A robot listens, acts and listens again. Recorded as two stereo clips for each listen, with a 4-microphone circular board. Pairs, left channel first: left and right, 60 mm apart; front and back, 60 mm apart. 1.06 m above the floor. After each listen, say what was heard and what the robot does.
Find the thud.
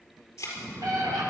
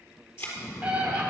The thud: 50° left. Turn 50° left.
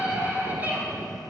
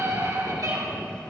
I heard a thud from this way, but can't make it out now.